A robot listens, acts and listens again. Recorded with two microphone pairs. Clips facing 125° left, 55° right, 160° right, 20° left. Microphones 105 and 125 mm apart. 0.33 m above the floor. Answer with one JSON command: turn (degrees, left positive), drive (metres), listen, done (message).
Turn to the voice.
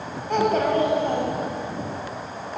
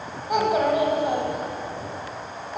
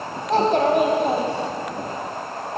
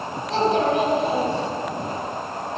{"turn": -130}
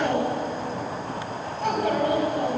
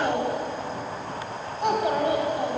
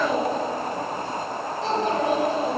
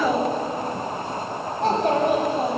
{"turn": 10}
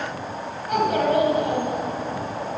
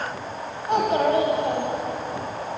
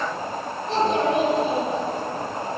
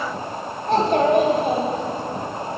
{"done": "Facing the child speaking, 1 to 2 m away."}